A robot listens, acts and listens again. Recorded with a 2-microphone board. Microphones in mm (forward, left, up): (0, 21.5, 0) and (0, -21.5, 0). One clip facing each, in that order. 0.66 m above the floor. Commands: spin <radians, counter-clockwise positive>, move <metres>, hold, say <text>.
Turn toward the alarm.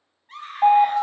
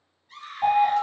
spin 0.61
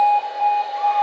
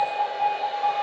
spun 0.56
spin 0.17
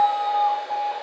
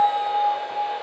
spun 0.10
say Facing the alarm.